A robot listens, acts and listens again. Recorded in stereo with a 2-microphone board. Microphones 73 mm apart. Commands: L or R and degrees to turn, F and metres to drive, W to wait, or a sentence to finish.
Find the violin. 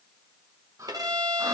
R65
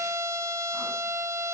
R40
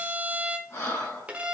R15
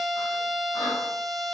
Found it: a violin, straight ahead.